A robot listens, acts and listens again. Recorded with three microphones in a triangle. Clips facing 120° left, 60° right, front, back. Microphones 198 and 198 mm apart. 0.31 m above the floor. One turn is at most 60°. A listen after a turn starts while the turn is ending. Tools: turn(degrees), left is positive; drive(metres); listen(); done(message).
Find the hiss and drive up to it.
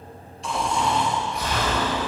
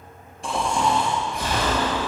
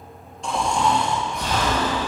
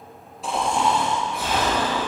listen()
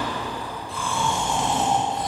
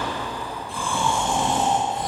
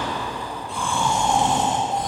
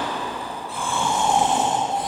listen()
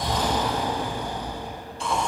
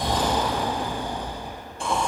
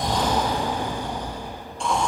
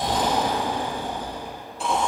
done("I can't make out a hiss, only snoring.")